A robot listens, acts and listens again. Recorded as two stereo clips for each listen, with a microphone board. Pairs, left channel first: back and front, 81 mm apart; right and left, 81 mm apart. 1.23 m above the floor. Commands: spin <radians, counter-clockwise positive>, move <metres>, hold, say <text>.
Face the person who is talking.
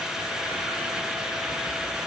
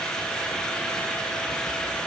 hold
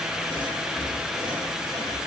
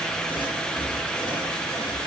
hold
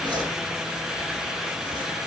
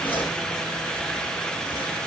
say I can't make out anyone speaking to turn to.